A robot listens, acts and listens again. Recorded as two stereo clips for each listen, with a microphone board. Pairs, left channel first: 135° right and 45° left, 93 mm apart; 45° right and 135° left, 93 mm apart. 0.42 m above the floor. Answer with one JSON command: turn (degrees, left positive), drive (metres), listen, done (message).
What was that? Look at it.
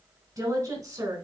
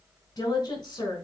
{"done": "Found it: a woman speaking, straight ahead, 2 to 4 m away."}